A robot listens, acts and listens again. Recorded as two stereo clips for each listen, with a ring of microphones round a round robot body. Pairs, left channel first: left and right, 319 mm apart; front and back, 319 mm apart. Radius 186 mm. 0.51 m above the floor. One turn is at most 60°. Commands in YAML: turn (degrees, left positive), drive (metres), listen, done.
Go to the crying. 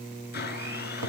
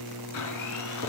listen: true
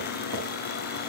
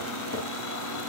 listen: true
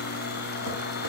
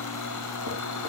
done: "I can't make out crying to turn to."